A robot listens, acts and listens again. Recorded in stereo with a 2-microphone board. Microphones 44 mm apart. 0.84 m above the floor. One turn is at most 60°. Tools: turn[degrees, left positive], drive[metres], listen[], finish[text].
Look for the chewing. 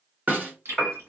Action: turn[-60]
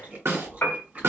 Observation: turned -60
Thought: So it is at 35° right.
Action: turn[-35]
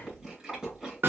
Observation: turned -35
Thought: The chewing is now 10° right.
Action: turn[-10]
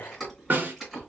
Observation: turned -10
Action: finish[Facing the chewing, 2 to 4 m away.]